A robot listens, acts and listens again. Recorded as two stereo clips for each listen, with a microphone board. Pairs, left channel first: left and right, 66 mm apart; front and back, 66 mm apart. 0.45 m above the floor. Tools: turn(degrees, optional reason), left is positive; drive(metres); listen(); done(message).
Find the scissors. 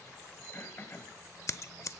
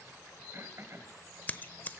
turn(degrees=60, reason="The scissors: 60° left.")
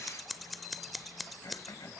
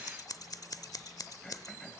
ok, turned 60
done("Facing the scissors.")